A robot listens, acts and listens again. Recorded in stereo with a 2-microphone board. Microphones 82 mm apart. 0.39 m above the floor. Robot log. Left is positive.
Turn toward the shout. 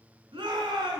note: The shout: about 75° right or 105° right.
cmd yaw -75
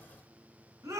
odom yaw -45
note: So it is at 40° right.
cmd yaw -40
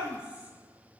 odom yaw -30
note: The shout is now 10° right.
cmd yaw -10
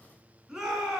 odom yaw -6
end: Facing the shout, 2 to 4 m away.